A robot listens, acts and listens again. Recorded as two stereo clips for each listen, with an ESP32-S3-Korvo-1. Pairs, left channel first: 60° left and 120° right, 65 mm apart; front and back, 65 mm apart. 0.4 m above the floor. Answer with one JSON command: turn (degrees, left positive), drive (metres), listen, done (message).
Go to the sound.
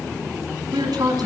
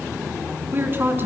{"turn": -125}
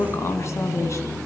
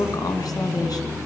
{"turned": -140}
{"turn": 15}
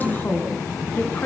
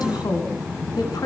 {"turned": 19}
{"drive": 1.0}
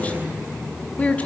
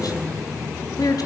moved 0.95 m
{"turn": -10}
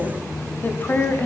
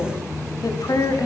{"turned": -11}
{"drive": 1.0}
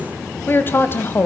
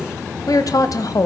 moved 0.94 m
{"turn": 10}
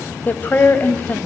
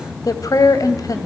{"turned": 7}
{"drive": 1.0}
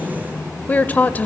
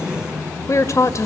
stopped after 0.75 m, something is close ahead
{"done": "Arrived at the woman speaking, straight ahead."}